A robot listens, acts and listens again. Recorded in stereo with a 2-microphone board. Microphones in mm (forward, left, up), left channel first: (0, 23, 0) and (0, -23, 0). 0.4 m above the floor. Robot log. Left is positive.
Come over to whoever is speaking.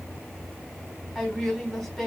cmd yaw +30
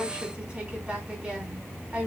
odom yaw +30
note: So it is at 30° right.
cmd yaw -30
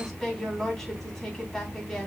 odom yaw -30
cmd fwd 1.0
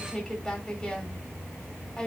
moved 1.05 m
note: The woman speaking is now 15° left.
cmd yaw +15
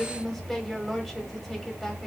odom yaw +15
cmd fwd 1.0
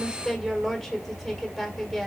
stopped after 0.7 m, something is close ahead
end: I am next to the woman speaking.